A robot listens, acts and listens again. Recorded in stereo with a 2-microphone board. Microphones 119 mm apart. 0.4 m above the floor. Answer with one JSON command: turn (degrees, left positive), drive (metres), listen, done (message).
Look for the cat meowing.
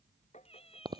{"turn": 55}
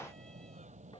{"listen": true}
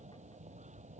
{"listen": true}
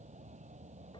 {"done": "I heard a cat meowing, but can't make it out now. It was about straight ahead or 70° left."}